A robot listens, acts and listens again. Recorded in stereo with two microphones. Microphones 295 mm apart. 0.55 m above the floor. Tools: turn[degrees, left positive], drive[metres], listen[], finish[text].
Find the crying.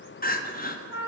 Thought: The crying: about 30° left or 150° left.
Action: turn[30]
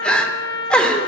Action: finish[Found it: crying, straight ahead, under 1 m away.]